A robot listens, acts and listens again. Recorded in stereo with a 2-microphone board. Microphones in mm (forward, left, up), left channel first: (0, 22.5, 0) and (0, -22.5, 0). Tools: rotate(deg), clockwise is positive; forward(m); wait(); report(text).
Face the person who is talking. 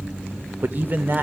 rotate(45)
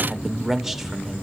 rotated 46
report("Facing the man speaking.")